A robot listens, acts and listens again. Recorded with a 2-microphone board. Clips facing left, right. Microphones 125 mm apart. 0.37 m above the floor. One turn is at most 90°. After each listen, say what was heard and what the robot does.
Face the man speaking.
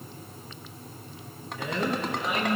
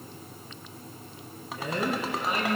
The man speaking: about 45° right or 135° right. Turn 45° right.
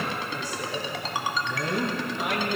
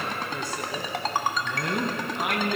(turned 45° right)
So it is at 65° right. Turn 65° right.
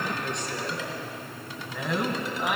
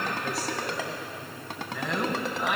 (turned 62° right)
Found it: a man speaking, straight ahead.